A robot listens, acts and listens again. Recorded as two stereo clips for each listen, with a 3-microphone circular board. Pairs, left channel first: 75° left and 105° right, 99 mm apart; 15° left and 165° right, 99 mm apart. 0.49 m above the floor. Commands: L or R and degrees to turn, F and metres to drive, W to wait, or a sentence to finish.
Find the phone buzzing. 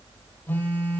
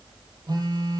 L150
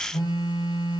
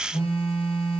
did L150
L35
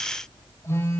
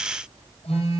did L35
L15
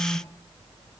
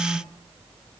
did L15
Found it: a phone buzzing, straight ahead, over 4 m away.